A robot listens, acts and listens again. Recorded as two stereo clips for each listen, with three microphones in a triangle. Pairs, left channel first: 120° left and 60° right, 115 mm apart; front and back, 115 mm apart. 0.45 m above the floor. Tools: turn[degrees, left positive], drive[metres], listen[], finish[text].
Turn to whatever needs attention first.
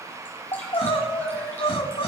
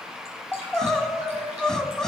Thought: The crying: 85° left.
Action: turn[85]
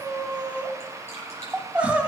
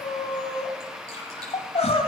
Thought: The crying is now 20° left.
Action: turn[20]
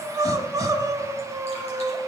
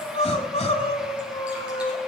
Action: finish[Found it: crying, straight ahead, 1 to 2 m away.]